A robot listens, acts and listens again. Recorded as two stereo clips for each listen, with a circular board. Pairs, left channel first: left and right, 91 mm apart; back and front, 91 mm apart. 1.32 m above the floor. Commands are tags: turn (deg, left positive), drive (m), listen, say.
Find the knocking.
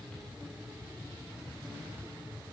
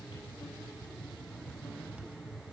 <listen/>
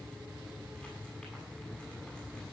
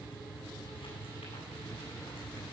<listen/>
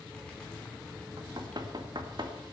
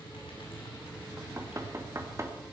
<turn deg="-55"/>
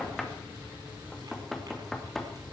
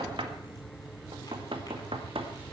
<say>Facing the knocking, 1 to 2 m away.</say>